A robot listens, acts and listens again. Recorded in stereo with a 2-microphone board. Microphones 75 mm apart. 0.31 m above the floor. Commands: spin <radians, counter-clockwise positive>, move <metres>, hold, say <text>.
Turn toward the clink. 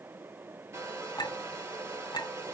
spin 1.13
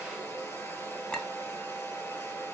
spin 0.17
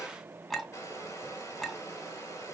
say Facing the clink, 2 to 4 m away.